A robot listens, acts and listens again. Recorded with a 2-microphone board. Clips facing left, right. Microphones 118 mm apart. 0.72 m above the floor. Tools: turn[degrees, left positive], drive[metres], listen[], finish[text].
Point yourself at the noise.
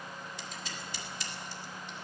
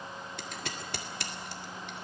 Thought: The scissors: about 65° right or 115° right.
Action: turn[-65]
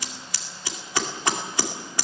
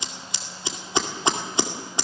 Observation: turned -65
Thought: So it is at 25° right.
Action: turn[-25]
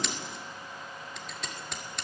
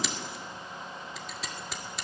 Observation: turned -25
Action: finish[Facing the scissors, 2 to 4 m away.]